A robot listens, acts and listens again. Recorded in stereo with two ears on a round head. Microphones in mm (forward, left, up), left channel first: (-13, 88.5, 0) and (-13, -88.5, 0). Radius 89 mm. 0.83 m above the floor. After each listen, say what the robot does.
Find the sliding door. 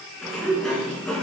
Turn 30° left.
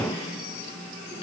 Turn 150° left.
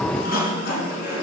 Turn 50° left.
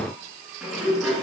Found it: a sliding door, straight ahead, 2 to 4 m away.